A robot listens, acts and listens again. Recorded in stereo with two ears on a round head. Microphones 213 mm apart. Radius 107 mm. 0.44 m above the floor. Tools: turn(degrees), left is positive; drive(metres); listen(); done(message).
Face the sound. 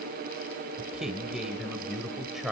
turn(degrees=30)
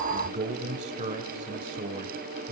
turn(degrees=-35)
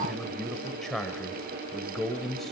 done("Found it: a man speaking, straight ahead.")